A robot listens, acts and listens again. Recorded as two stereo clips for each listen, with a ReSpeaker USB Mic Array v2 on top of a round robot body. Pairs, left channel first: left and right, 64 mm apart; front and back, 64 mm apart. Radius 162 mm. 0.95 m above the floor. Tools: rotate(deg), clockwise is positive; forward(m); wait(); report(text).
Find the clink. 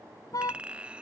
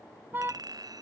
rotate(160)
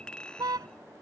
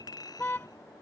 rotate(-15)
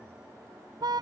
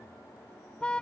wait()
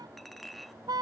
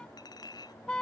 report("Found it: a clink, straight ahead.")